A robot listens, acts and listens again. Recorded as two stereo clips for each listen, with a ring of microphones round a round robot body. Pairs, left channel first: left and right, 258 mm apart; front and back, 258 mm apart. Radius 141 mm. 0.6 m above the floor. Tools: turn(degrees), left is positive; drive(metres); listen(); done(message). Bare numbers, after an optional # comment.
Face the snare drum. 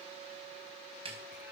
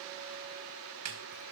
# The snare drum: 160° right.
turn(-160)
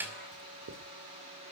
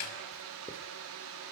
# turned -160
done("Facing the snare drum.")